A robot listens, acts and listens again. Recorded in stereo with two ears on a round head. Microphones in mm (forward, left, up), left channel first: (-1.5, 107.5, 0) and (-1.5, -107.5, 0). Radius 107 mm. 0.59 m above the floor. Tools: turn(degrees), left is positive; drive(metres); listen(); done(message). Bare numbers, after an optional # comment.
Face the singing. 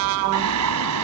turn(-90)
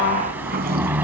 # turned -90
# So it is at 10° right.
turn(-10)
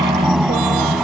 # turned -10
done("Found it: singing, straight ahead.")